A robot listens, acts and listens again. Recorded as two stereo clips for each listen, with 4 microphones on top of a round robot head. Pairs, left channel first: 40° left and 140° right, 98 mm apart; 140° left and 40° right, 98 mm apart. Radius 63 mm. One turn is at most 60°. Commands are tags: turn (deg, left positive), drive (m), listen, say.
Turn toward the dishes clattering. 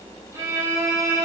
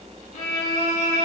<listen/>
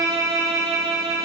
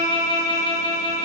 <listen/>
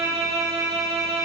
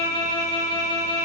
<say>I can't make out dishes clattering to turn to.</say>